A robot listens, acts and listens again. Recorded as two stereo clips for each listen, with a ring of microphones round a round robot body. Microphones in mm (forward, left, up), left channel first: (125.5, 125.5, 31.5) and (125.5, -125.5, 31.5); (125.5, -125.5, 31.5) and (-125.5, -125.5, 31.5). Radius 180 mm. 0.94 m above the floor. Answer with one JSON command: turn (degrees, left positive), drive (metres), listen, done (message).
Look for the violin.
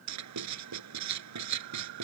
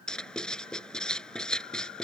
{"listen": true}
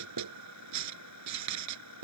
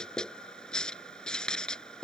{"listen": true}
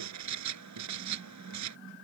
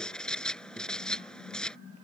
{"done": "I can't make out a violin to turn to."}